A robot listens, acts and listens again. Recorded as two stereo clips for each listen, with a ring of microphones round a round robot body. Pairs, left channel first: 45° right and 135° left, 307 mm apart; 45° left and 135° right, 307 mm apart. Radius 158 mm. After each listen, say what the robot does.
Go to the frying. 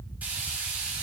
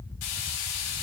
Turn 50° left.
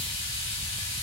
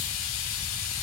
Turn 10° left.
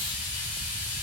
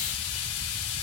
Drive 1.0 m forward.
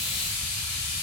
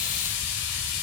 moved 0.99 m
Turn 10° right.
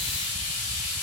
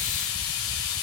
Drive 1.0 m forward.
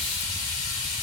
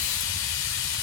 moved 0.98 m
Drive 1.0 m forward.
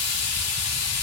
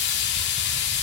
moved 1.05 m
Turn 10° right.
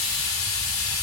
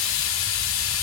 Drive 1.0 m forward.
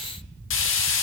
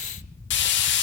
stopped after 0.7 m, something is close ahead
I am next to the frying.